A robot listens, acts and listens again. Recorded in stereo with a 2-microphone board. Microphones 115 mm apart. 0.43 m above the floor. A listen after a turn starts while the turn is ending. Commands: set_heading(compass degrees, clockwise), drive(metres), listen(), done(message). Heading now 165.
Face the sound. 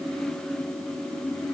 listen()
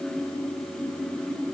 listen()
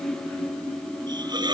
set_heading(205)
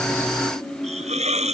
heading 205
set_heading(305)
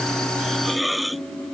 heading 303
done("Found it: a hiss, straight ahead.")